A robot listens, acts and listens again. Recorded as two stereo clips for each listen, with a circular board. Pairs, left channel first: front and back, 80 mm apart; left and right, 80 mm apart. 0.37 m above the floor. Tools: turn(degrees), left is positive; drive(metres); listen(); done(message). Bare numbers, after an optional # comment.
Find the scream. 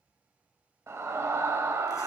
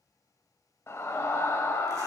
# The scream: 135° left.
turn(135)
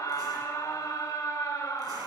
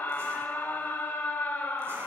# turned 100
# The scream is now 30° left.
turn(30)
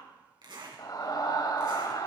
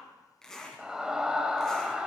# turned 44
# The scream is now 10° right.
turn(-10)
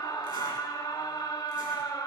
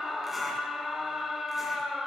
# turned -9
done("Found it: a scream, straight ahead.")